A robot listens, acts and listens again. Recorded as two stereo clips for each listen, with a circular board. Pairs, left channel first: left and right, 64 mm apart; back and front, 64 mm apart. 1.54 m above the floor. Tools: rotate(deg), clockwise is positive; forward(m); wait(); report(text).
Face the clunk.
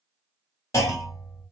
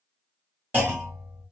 rotate(-55)
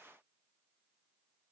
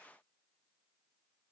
report("Facing where the clunk came from. I can't hear it now.")